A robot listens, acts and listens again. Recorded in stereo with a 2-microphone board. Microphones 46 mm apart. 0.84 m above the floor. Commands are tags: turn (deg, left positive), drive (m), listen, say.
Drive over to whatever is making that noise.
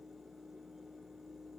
<listen/>
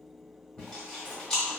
<turn deg="15"/>
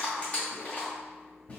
<turn deg="150"/>
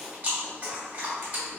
<turn deg="-40"/>
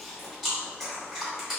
<drive m="1.0"/>
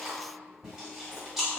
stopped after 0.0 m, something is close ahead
<turn deg="-10"/>
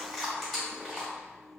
<say>Blocked. The chewing is further on, straight ahead.</say>